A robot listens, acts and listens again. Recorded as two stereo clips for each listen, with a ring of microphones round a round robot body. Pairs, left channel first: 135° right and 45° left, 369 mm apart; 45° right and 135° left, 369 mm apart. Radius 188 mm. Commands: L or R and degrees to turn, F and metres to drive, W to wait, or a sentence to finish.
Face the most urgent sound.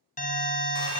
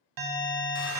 L160
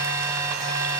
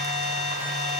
R35
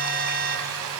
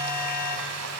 R15
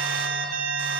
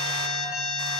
Facing the alarm, 1 to 2 m away.